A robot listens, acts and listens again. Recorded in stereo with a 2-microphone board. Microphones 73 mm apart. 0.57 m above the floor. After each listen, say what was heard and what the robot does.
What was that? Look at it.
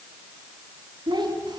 The child speaking: about 70° right or 110° right. Turn 70° right.
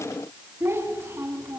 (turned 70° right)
So it is at 35° right. Turn 35° right.
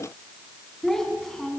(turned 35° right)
Facing the child speaking, over 4 m away.